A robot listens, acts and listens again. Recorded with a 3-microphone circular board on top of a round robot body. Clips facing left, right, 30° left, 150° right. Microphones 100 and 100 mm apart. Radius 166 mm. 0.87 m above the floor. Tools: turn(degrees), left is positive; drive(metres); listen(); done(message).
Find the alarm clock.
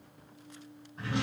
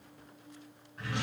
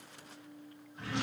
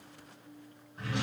listen()
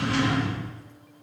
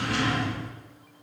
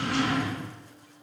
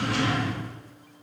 listen()
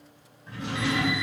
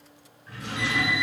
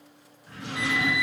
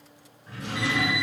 turn(degrees=95)
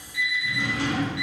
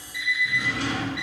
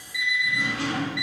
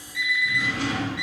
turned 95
turn(degrees=40)
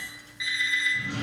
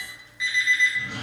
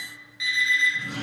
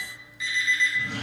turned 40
turn(degrees=10)
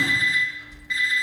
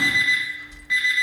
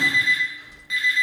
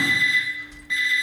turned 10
done("Found it: an alarm clock, straight ahead, 1 to 2 m away.")